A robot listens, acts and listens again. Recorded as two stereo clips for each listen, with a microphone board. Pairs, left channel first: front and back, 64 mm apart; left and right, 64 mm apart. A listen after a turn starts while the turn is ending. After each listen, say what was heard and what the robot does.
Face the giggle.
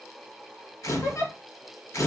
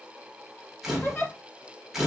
The giggle: 40° left. Turn 40° left.
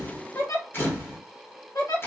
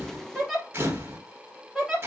Facing the giggle.